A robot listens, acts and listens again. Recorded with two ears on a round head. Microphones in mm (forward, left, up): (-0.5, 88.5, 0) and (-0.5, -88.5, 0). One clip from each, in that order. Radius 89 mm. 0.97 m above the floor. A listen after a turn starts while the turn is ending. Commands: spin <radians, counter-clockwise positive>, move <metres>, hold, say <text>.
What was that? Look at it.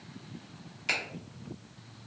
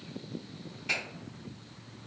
spin 1.57
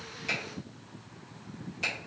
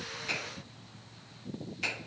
say Facing the finger snap, 1 to 2 m away.